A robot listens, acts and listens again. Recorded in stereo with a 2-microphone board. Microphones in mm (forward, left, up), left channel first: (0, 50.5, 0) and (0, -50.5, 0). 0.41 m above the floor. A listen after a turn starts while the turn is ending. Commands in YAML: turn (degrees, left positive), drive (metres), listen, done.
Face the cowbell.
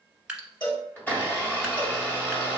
turn: 40
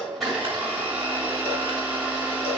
listen: true
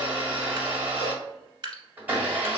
listen: true
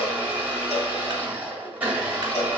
done: "I heard a cowbell, but can't make it out now. It was about straight ahead or 100° left."